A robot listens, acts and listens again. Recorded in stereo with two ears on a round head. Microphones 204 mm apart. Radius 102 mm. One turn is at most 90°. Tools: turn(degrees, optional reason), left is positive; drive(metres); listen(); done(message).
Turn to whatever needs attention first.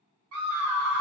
turn(degrees=-90)
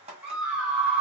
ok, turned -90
done("Found it: a scream, straight ahead.")